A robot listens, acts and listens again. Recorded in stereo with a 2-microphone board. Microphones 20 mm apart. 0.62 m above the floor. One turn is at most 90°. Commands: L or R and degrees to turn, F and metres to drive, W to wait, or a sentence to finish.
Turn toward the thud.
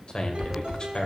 L50
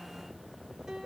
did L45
W
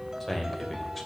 I heard a thud, but can't make it out now. It was about 5° left or 85° left.